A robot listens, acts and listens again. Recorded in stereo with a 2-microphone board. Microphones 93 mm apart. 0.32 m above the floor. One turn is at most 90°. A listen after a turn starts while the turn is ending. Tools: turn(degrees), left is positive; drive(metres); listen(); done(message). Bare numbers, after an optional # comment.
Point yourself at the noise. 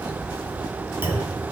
# The clunk: about 25° right or 155° right.
turn(-25)
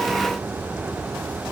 listen()
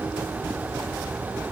done("I heard a clunk, but can't make it out now. It was about straight ahead or 130° right.")